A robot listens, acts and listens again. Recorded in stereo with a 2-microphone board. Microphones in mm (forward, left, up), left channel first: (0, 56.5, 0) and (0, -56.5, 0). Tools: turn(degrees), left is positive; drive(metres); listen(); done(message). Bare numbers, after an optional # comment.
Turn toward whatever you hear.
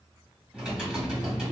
turn(-30)
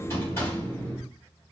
# So it is at 25° left.
turn(25)
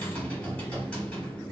# The typing on a keyboard is now 10° left.
turn(10)
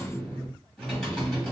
done("Facing the typing on a keyboard, 2 to 4 m away.")